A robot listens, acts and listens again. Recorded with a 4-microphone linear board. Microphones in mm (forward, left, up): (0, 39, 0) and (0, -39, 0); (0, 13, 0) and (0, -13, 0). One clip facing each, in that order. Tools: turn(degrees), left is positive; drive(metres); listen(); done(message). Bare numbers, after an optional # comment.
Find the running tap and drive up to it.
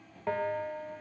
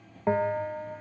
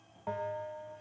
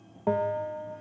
listen()
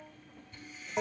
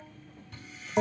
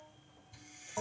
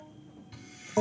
# The running tap: about 70° right or 110° right.
turn(-70)
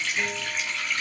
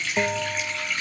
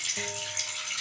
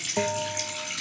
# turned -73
drive(1.0)
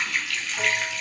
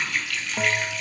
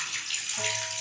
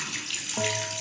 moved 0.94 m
drive(1.0)
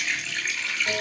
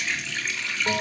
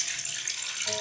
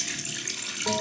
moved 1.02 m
drive(1.0)
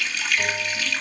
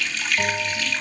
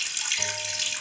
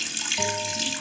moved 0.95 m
# The running tap is now 10° left.
turn(10)
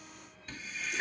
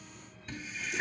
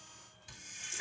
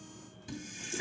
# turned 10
drive(1.0)
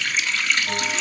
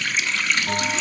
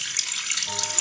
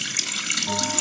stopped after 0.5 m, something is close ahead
done("I am next to the running tap.")